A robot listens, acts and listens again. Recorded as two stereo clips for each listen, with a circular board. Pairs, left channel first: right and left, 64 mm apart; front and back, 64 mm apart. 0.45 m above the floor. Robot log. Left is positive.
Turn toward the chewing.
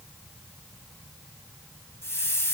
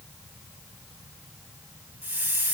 cmd idle
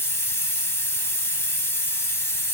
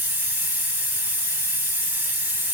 cmd idle
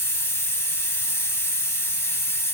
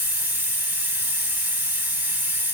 end: I can't make out chewing to turn to.